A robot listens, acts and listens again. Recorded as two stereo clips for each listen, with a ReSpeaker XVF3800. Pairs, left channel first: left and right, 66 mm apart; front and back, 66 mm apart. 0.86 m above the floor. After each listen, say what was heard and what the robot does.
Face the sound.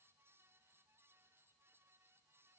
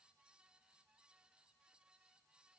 Keep listening.
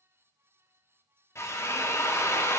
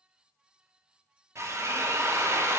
The drill: 135° left. Turn 135° left.
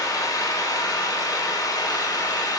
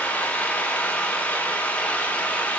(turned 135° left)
The drill is now 65° left. Turn 65° left.
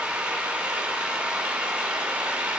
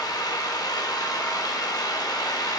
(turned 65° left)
The drill is now 15° right. Turn 15° right.
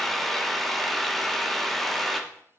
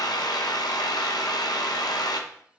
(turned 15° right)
Facing the drill.